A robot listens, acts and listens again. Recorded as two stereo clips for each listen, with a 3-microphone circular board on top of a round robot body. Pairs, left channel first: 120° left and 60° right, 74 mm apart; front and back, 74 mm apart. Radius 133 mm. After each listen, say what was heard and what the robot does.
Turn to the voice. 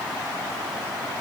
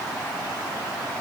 Keep listening.
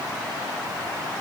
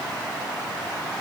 Keep listening.
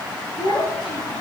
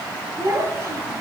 The child speaking: 125° left. Turn 125° left.
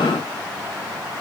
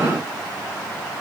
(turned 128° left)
Keep listening.
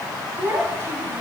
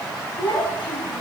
Found it: a child speaking, straight ahead, over 4 m away.